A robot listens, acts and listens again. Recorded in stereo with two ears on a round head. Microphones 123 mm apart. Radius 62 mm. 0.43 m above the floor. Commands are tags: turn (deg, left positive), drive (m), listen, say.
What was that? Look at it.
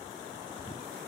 <listen/>
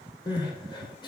<turn deg="35"/>
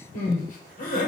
<turn deg="110"/>
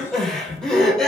<say>Found it: crying, straight ahead.</say>